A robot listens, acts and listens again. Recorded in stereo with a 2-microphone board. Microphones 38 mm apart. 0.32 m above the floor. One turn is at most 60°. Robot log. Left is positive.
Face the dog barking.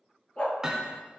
note: The dog barking: about 35° left or 145° left.
cmd yaw +35
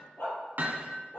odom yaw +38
note: So it is at 100° left.
cmd yaw +60
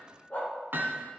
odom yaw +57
note: The dog barking is now 45° left.
cmd yaw +45
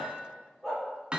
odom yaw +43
end: Found it: a dog barking, straight ahead.